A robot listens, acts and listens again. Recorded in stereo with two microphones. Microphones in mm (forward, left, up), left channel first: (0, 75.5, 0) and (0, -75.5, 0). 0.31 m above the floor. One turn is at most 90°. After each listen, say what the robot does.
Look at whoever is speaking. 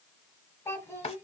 Turn 20° left.
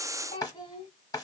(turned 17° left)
Turn 90° left.
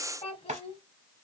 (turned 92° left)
Turn 45° left.
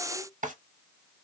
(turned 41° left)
Keep listening.
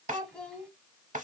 Facing the child speaking, 1 to 2 m away.